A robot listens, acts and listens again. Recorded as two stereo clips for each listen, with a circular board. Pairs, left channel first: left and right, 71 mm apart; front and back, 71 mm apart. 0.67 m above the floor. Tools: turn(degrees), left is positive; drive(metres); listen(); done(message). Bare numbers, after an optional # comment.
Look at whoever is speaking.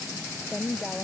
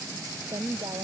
# The woman speaking: 175° left.
turn(175)
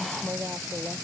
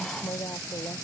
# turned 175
# The woman speaking is now 35° right.
turn(-35)
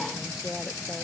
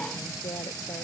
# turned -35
listen()
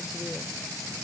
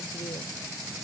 listen()
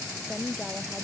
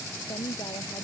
done("Facing the woman speaking.")